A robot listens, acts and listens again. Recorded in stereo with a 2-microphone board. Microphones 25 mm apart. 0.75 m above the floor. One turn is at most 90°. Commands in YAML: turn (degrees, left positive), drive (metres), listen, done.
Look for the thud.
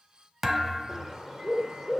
turn: -30
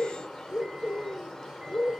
listen: true
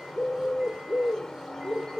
done: "I heard a thud, but can't make it out now. It was about 15° left or 135° right."